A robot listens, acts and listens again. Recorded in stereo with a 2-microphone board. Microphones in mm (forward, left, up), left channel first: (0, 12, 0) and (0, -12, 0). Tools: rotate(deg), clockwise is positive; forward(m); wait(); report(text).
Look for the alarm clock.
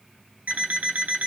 rotate(90)
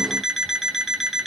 report("Facing the alarm clock, 2 to 4 m away.")